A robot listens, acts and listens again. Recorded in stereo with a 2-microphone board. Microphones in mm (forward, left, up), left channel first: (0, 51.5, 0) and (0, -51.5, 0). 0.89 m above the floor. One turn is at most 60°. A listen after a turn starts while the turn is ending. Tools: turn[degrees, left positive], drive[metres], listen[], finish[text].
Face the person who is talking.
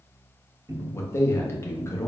Thought: The man speaking: about 25° left or 155° left.
Action: turn[25]
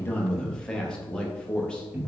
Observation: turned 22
Thought: So it is at 10° left.
Action: turn[10]
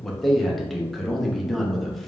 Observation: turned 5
Action: finish[Facing the man speaking.]